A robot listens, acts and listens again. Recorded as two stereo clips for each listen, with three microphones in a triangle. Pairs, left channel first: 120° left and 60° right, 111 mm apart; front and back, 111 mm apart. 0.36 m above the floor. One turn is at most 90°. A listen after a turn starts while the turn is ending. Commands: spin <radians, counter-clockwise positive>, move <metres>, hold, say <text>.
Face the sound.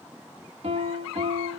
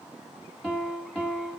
spin -1.57
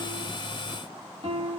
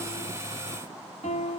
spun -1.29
spin -0.26
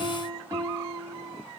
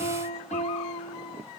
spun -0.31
say Found it: a piano, straight ahead, 1 to 2 m away.